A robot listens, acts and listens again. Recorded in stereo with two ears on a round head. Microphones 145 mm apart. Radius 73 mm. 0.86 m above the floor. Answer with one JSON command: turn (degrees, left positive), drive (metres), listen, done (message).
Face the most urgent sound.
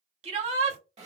{"turn": -45}
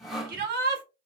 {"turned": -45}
{"turn": -90}
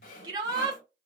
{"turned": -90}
{"turn": -30}
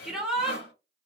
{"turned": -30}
{"done": "Facing the shout, 1 to 2 m away."}